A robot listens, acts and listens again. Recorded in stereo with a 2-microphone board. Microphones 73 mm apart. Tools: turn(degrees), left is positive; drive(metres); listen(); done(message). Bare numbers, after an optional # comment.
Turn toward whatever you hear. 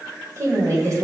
# The woman speaking: about 50° right or 130° right.
turn(-50)
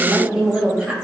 # So it is at 10° right.
turn(-10)
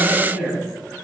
done("Found it: a woman speaking, straight ahead.")